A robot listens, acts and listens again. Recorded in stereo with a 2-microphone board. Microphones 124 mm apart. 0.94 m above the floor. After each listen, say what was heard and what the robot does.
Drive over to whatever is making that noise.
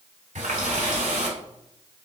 Turn 90° right.
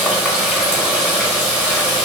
So it is at 10° right. Turn 10° right.
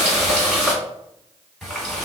Drive 1.0 m forward.
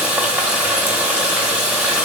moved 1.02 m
The running tap is now 10° right. Turn 10° right.
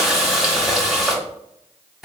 Drive 1.0 m forward.
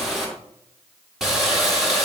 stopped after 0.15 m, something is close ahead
Arrived at the running tap, straight ahead.